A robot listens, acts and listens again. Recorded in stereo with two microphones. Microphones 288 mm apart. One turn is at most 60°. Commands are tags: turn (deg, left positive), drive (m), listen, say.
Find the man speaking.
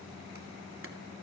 <listen/>
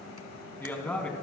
<turn deg="30"/>
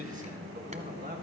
<turn deg="-30"/>
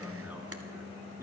<turn deg="-10"/>
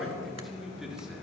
<say>Found it: a man speaking, straight ahead.</say>